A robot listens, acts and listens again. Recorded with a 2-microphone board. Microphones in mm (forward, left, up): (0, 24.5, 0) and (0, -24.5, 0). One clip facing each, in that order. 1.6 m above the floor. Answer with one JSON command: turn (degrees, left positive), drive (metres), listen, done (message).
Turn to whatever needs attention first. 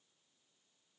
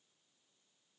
{"listen": true}
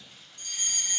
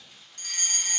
{"turn": -60}
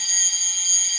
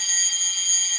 {"turn": -15}
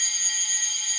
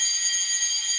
{"done": "Found it: a fire alarm, straight ahead, 1 to 2 m away."}